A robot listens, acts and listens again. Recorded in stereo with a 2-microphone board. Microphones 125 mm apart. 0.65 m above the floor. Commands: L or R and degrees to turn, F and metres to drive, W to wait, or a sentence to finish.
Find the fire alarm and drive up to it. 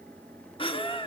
W
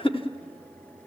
W
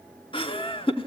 I can't make out a fire alarm to turn to.